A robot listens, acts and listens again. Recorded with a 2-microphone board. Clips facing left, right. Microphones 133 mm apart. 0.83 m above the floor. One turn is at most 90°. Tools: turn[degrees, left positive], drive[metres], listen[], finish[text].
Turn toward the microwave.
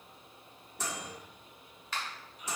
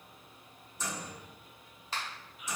Action: turn[90]
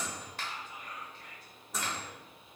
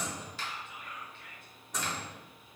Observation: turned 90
Action: finish[Found it: a microwave, straight ahead.]